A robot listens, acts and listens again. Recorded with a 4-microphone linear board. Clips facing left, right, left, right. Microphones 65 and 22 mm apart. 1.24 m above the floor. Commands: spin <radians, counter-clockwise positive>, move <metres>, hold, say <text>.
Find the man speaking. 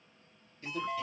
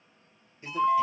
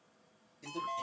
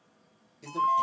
spin -0.35
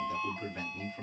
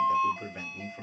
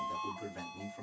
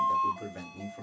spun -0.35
spin -0.35
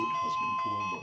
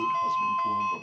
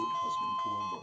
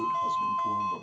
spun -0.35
hold
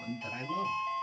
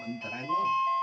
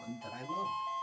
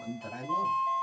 spin -0.44
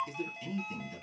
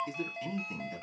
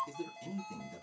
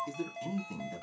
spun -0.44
spin -2.44
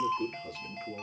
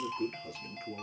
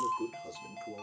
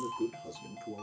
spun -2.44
say Facing the man speaking, 2 to 4 m away.